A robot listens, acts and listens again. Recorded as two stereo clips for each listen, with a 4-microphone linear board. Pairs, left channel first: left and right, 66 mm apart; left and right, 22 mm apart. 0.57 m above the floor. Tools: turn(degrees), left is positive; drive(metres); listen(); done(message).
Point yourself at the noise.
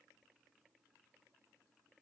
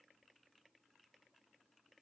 listen()
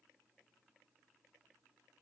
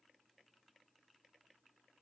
listen()
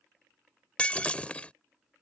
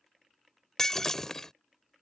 turn(degrees=20)
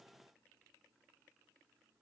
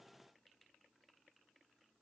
listen()
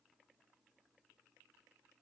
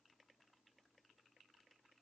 done("I heard breaking glass, but can't make it out now. It was about straight ahead or 140° left.")